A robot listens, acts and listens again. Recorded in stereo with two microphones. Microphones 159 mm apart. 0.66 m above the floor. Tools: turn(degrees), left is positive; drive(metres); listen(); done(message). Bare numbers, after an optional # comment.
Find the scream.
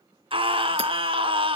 # The scream: about 35° right or 145° right.
turn(-35)
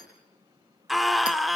done("Facing the scream, 1 to 2 m away.")